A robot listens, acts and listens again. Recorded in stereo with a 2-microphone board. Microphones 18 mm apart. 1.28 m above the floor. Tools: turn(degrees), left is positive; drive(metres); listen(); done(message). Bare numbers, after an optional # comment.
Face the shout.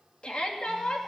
# The shout: about 70° left or 110° left.
turn(70)
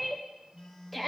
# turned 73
done("Found it: a shout, straight ahead, 2 to 4 m away.")